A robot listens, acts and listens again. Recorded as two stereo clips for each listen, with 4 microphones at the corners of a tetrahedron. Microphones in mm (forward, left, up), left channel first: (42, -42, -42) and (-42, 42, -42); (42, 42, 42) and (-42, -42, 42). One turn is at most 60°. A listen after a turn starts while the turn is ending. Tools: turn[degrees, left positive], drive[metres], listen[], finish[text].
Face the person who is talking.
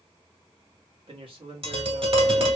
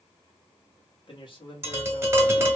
Thought: The man speaking: 90° left.
Action: turn[60]
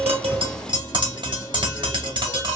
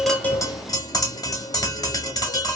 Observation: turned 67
Thought: Nothing new. It was at 25° left.
Action: turn[25]
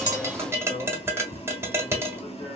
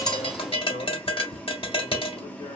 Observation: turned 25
Action: finish[Facing the man speaking, 1 to 2 m away.]